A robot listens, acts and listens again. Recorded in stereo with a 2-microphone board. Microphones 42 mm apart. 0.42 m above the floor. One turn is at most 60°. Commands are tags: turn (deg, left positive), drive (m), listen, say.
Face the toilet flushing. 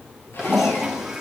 <turn deg="-30"/>
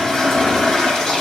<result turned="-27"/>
<turn deg="15"/>
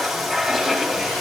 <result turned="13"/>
<say>Found it: a toilet flushing, straight ahead, 2 to 4 m away.</say>